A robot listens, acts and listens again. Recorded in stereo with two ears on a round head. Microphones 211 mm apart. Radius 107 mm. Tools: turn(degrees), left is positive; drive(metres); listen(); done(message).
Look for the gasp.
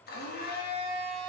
listen()
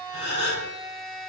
turn(degrees=25)
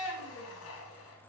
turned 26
listen()
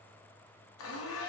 done("I heard a gasp, but can't make it out now. It was about 5° right or 130° left.")